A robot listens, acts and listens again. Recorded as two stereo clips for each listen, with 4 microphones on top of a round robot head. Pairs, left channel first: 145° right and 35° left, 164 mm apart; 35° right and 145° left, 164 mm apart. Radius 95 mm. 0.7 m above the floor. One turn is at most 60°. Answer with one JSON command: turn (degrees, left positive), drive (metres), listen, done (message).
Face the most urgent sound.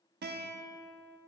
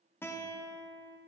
{"listen": true}
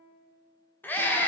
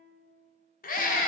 {"turn": -60}
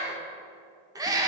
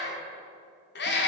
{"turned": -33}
{"turn": -35}
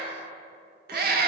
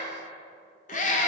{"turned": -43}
{"turn": 10}
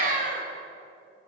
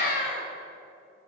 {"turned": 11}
{"done": "Facing the scream."}